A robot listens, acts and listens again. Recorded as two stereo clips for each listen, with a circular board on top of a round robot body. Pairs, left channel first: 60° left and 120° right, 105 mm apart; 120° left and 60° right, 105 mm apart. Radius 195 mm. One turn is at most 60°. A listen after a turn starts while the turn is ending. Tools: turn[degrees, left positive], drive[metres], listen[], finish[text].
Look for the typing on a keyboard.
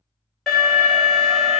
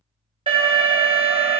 Action: listen[]
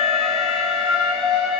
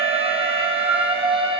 Action: listen[]
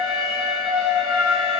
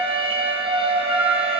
Action: finish[I can't make out typing on a keyboard to turn to.]